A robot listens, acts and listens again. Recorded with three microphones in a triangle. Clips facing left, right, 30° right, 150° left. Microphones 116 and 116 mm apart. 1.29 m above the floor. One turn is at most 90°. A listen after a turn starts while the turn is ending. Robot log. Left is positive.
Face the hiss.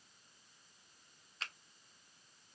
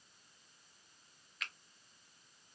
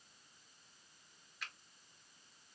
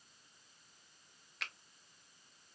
cmd idle
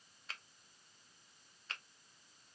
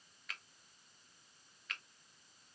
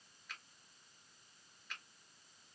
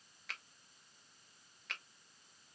cmd idle
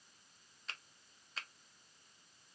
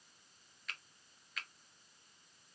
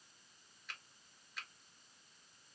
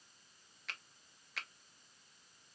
end: I can't make out a hiss, only a finger snap.